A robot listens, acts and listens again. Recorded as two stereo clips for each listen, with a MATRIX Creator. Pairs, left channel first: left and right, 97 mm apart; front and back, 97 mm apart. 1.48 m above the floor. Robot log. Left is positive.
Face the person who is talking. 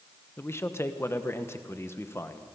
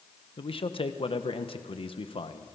note: The man speaking: 25° left.
cmd yaw +25
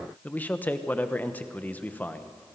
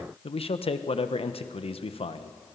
note: The man speaking is now 15° left.
cmd yaw +15
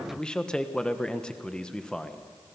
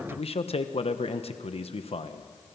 note: The man speaking is now 10° left.
cmd yaw +10
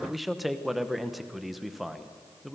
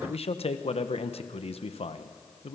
end: Facing the man speaking, 1 to 2 m away.